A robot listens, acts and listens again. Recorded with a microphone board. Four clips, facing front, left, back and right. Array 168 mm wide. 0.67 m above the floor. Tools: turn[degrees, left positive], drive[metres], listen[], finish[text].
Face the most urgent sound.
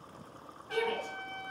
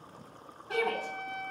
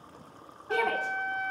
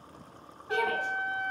Thought: The shout: 175° left.
Action: turn[175]
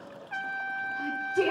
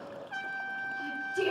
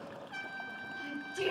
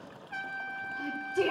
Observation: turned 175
Thought: The shout is now 25° right.
Action: turn[-25]
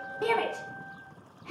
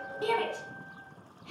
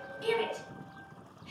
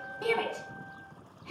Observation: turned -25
Thought: The shout is now 10° right.
Action: turn[-10]
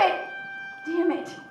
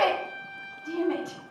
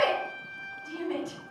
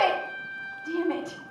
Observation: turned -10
Action: finish[Found it: a shout, straight ahead.]